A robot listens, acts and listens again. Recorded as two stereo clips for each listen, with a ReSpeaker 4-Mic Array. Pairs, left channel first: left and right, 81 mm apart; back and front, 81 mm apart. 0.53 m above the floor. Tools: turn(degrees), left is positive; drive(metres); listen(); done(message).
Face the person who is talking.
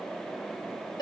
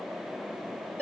listen()
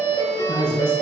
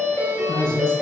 turn(degrees=-150)
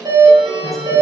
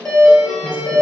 listen()
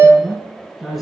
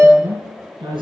done("Found it: a woman speaking, straight ahead.")